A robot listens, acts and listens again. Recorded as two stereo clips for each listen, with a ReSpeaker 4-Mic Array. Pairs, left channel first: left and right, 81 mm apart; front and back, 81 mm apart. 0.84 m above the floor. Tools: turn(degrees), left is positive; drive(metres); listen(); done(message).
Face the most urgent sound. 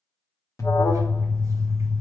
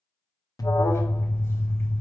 turn(degrees=40)
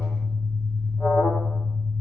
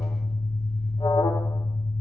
done("Facing the alarm.")